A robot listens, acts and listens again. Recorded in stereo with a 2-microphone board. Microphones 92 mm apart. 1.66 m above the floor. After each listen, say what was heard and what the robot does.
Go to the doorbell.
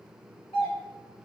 Turn 90° left.
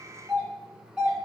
So it is at 10° right. Turn 10° right.
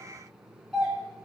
Drive 1.0 m forward.
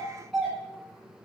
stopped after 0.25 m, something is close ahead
Blocked. The doorbell is further on, straight ahead.